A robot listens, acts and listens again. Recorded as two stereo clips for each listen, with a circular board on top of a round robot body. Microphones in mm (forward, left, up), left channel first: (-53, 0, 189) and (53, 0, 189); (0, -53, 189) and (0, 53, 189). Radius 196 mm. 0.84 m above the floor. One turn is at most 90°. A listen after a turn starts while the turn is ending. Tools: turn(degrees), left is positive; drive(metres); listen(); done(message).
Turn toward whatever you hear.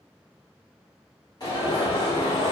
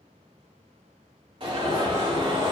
turn(degrees=90)
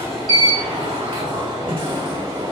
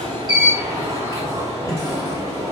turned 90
turn(degrees=30)
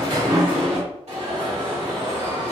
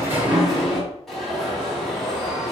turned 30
done("Facing the alarm, 2 to 4 m away.")